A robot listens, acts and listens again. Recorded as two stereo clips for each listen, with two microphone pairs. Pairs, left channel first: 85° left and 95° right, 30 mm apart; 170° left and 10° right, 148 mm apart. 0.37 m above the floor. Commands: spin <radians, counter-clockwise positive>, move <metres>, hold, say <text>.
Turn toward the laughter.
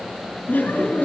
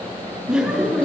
spin 1.31
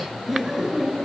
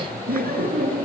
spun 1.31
spin -0.17
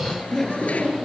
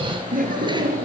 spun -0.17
say Found it: laughter, straight ahead, over 4 m away.